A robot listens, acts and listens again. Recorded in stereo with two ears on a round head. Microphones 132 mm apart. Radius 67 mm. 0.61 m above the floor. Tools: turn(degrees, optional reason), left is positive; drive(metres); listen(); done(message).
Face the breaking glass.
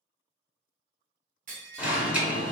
turn(degrees=-55, reason="The breaking glass: about 55° right or 125° right.")
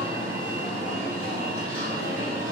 listen()
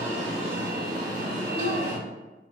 done("I heard breaking glass, but can't make it out now. It was about straight ahead or 70° right.")